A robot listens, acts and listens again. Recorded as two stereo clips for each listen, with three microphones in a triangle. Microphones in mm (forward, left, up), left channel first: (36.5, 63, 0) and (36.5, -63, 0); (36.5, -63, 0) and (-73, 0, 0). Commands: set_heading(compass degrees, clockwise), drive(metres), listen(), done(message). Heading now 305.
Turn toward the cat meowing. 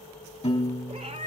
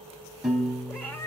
set_heading(45)
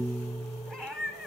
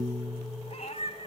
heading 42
done("Facing the cat meowing.")